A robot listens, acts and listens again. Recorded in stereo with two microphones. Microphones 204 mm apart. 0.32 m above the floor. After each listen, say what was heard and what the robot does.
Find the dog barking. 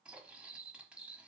Keep listening.
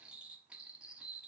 Keep listening.
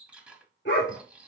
The dog barking: about 65° left or 115° left. Turn 65° left.
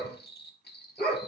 So it is at 45° left. Turn 45° left.
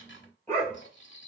The dog barking is now 10° left. Turn 10° left.
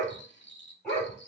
Found it: a dog barking, straight ahead.